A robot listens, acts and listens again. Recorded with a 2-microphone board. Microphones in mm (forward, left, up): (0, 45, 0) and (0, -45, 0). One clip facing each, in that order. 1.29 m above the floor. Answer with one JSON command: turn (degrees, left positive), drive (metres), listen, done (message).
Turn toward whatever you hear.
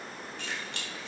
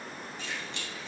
{"turn": 70}
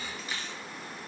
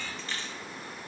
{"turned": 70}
{"turn": 10}
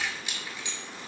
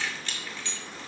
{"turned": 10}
{"turn": 15}
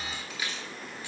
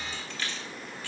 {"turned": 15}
{"turn": 20}
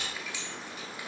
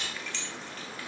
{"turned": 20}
{"turn": 10}
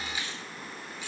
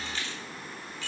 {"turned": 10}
{"turn": 15}
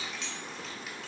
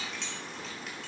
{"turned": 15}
{"done": "Facing the keys jangling, 2 to 4 m away."}